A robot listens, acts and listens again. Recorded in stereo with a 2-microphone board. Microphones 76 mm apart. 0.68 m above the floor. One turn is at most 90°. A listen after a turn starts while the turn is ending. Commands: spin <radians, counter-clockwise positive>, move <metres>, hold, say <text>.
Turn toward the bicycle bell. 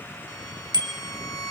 spin -1.22
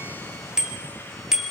say Found it: a bicycle bell, straight ahead.